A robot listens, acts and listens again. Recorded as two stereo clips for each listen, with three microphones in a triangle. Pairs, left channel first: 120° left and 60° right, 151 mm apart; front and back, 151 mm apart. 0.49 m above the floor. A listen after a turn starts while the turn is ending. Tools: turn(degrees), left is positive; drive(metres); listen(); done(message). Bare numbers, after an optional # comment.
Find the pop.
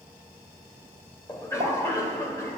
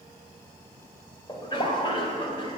# The pop: 25° right.
turn(-25)
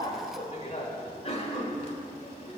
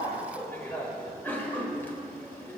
done("Facing where the pop came from. I can't hear it now.")